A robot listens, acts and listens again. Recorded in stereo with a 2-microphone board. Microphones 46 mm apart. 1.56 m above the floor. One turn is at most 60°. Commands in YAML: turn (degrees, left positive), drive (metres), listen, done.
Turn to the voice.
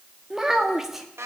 turn: -30
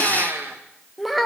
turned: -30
turn: 30
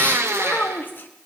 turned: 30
turn: 60
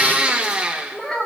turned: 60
turn: 15
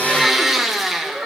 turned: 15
done: "Facing the child speaking."